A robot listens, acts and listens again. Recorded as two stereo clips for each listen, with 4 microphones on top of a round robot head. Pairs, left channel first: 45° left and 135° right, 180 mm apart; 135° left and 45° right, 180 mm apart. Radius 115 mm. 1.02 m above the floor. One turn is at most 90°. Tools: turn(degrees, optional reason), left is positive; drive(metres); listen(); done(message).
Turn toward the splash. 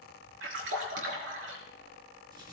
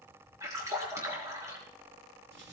turn(degrees=-90, reason="The splash: 120° right.")
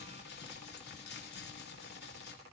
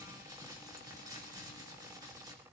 turn(degrees=-30, reason="Nothing new. It was at 30° right.")
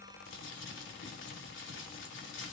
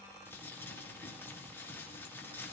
done("Facing where the splash came from. I can't hear it now.")